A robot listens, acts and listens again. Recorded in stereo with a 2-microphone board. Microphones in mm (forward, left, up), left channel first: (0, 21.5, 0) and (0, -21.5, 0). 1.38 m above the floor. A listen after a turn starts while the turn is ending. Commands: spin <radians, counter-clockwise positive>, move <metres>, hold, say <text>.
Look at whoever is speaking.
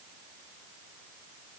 hold
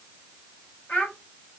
spin 0.61
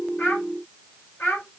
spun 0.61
spin 2.01
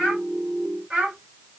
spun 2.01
spin -0.35
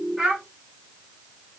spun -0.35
say Facing the child speaking.